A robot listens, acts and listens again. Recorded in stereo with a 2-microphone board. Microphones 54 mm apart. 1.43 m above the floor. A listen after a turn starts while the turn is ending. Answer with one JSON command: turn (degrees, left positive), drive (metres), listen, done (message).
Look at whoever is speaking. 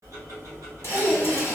{"turn": -40}
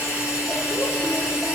{"listen": true}
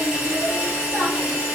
{"listen": true}
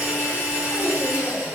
{"done": "I heard a child speaking, but can't make it out now. It was about straight ahead or 100° right."}